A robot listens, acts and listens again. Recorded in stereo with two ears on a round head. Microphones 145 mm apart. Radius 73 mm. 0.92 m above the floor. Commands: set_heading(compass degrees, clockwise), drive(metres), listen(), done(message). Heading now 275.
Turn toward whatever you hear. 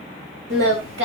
set_heading(5)
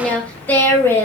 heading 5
set_heading(350)
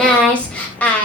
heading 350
set_heading(340)
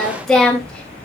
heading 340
done("Facing the singing.")